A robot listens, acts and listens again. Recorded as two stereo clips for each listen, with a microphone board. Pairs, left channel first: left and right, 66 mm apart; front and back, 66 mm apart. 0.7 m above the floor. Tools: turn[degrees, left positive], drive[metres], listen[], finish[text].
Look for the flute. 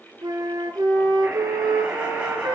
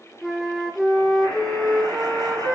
Thought: The flute: 85° right.
Action: turn[-85]
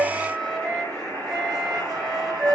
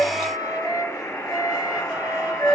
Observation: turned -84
Action: finish[Found it: a flute, straight ahead.]